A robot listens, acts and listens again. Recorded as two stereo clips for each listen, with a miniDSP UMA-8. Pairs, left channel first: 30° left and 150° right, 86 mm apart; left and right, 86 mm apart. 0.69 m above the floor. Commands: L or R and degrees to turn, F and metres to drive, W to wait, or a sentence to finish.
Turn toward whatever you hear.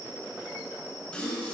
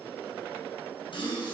L105
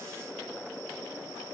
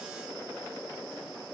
I heard a gasp from this way, but can't make it out now.